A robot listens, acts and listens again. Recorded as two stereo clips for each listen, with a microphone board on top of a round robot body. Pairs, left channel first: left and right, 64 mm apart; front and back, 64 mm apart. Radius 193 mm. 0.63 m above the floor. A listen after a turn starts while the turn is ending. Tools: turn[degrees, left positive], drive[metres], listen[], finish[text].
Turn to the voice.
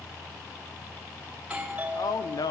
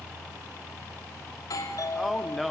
Thought: The man speaking: 90° left.
Action: turn[90]
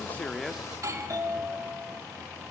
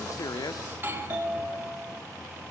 Action: listen[]
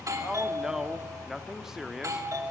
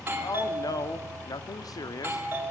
Thought: The man speaking is now 10° right.
Action: turn[-10]
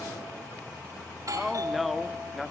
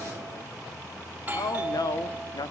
Action: finish[Found it: a man speaking, straight ahead.]